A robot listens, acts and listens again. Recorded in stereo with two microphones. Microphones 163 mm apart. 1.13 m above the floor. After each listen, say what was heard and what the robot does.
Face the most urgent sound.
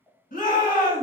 The shout: about 55° left or 125° left. Turn 55° left.
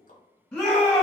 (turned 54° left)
Facing the shout.